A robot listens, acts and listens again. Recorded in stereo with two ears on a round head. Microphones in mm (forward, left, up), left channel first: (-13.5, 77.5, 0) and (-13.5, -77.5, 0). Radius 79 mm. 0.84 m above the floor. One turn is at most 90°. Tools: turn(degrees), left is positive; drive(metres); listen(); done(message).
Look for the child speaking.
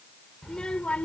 turn(degrees=30)
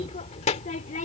turn(degrees=90)
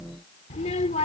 turn(degrees=35)
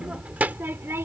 turn(degrees=-15)
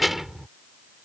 done("Found it: a child speaking, straight ahead.")